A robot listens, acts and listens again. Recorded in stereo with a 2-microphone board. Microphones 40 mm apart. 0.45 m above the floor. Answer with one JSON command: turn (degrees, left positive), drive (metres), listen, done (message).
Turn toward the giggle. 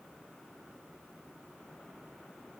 {"listen": true}
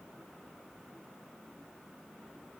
{"listen": true}
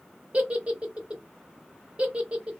{"turn": -30}
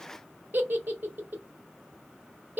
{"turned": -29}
{"turn": -120}
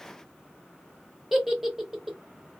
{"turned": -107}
{"turn": -10}
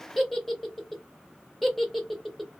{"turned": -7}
{"done": "Facing the giggle, under 1 m away."}